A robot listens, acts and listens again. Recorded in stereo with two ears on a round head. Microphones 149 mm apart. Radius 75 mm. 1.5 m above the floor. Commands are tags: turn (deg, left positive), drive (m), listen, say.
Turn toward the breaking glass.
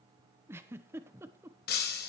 <turn deg="65"/>
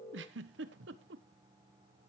<listen/>
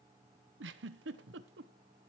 <say>I heard breaking glass, but can't make it out now. It was about straight ahead or 50° left.</say>